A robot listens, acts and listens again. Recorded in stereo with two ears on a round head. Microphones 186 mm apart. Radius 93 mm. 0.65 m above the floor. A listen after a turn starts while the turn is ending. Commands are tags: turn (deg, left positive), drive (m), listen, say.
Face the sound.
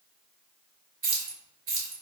<turn deg="-75"/>
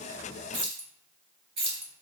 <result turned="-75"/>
<turn deg="-30"/>
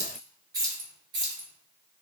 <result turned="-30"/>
<turn deg="-25"/>
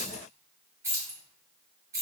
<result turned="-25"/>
<turn deg="-15"/>
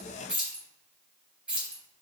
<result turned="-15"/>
<say>Found it: keys jangling, straight ahead.</say>